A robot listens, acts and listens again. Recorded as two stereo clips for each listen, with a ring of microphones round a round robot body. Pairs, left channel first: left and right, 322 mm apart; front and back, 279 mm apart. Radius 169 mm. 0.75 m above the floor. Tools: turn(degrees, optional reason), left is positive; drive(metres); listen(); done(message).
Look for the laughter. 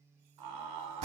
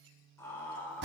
turn(degrees=-85, reason="The laughter: 85° right.")
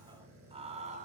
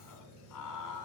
turn(degrees=-25, reason="The laughter is now 25° right.")
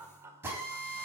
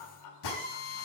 turn(degrees=-10, reason="The laughter is now 10° right.")
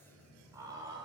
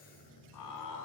turn(degrees=-15, reason="The laughter is now 15° right.")
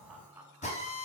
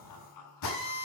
done("Facing the laughter.")